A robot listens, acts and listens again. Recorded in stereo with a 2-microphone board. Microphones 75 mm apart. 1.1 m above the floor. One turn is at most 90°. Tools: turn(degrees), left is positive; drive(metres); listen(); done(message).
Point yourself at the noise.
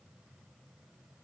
listen()
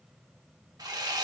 turn(degrees=-55)
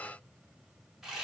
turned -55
done("Found it: sawing, straight ahead, under 1 m away.")